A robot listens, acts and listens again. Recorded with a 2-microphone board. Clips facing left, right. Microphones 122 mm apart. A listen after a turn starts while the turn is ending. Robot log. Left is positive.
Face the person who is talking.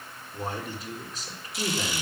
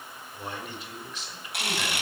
note: The man speaking: about 40° left or 140° left.
cmd yaw +40
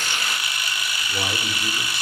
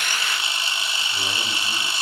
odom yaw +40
cmd idle
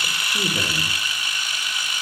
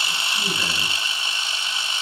cmd idle
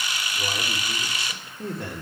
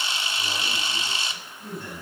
note: So it is at 105° left.
cmd yaw +105
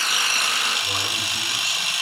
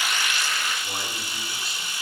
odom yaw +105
cmd idle
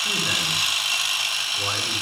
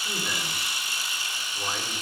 cmd idle
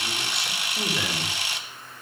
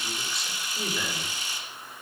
end: Facing where the man speaking came from. I can't hear it now.